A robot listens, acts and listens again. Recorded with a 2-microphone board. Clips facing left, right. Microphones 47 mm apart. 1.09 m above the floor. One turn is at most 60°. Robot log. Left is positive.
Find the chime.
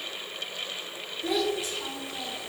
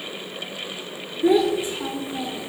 cmd idle
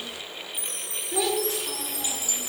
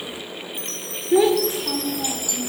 note: The chime: about 20° left or 160° left.
cmd yaw +20
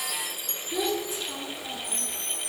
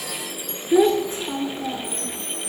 end: Facing the chime.